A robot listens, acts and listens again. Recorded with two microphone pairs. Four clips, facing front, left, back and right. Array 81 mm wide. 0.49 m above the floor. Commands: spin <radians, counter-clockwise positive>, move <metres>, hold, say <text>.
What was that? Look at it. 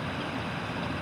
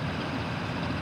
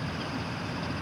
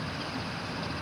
hold
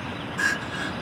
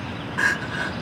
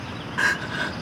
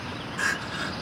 spin 2.36
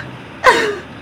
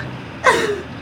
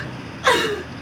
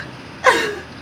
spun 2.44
say Facing the crying.